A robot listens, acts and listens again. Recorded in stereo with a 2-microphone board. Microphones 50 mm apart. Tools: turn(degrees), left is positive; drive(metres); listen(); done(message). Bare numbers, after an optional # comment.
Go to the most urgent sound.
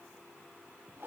listen()
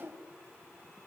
listen()
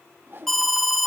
turn(30)
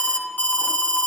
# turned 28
# So it is at 145° left.
turn(145)
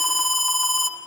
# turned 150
drive(1.0)
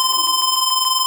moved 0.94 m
drive(1.0)
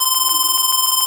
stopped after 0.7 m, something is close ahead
done("Arrived at the alarm, straight ahead.")